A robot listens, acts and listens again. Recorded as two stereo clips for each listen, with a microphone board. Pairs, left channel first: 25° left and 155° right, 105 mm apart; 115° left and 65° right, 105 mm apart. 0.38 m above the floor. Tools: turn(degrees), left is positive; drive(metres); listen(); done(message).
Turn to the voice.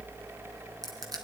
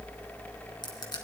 listen()
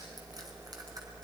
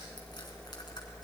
listen()
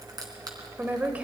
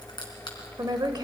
turn(degrees=-90)
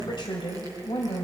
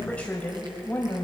turn(degrees=45)
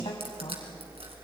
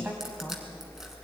listen()
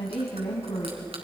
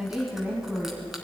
turn(degrees=10)
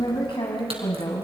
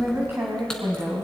done("Facing the woman speaking.")